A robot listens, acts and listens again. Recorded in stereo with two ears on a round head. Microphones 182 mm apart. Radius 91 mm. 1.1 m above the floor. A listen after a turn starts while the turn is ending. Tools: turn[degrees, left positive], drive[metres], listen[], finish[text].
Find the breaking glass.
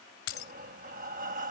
Thought: The breaking glass: about 55° left or 125° left.
Action: turn[55]
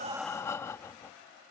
Action: listen[]
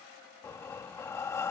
Action: finish[I heard breaking glass, but can't make it out now. It was about straight ahead or 70° left.]